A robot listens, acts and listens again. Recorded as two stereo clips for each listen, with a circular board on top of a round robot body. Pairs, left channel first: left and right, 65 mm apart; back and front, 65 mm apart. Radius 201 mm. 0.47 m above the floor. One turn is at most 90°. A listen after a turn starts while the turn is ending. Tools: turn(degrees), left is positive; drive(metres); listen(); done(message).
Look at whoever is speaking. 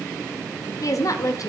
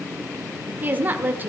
turn(degrees=60)
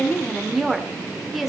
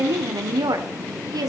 done("Facing the woman speaking, 1 to 2 m away.")